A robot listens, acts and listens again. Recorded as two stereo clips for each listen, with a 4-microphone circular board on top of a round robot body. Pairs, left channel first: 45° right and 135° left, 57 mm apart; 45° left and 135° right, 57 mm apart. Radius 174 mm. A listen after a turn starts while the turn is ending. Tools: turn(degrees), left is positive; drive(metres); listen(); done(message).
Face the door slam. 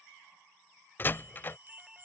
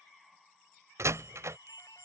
turn(degrees=-100)
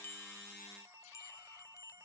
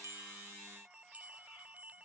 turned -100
done("I heard a door slam from this way, but can't make it out now.")